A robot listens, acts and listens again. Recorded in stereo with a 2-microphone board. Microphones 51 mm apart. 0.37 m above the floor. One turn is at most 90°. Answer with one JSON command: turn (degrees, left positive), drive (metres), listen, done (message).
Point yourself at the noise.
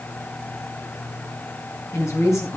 {"turn": 70}
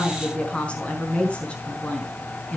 {"turn": 25}
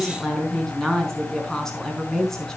{"turn": 10}
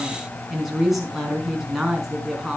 {"done": "Found it: a woman speaking, straight ahead, over 4 m away."}